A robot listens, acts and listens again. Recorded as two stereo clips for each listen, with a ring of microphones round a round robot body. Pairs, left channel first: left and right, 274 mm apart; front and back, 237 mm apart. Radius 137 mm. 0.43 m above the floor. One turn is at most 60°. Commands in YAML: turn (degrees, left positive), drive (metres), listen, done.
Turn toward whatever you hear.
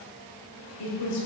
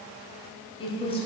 turn: 60
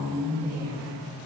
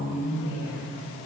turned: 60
turn: 10
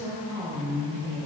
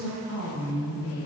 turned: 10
turn: -15
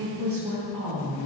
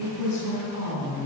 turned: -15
turn: -15
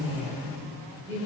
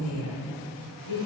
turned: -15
turn: -10
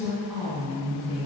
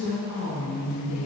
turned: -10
done: "Found it: a woman speaking, straight ahead, 2 to 4 m away."